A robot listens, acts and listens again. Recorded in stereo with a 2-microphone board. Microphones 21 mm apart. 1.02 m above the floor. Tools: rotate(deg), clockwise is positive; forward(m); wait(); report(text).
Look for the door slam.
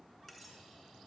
wait()
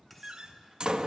rotate(40)
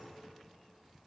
wait()
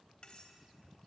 report("I heard a door slam, but can't make it out now. It was about straight ahead or 100° right.")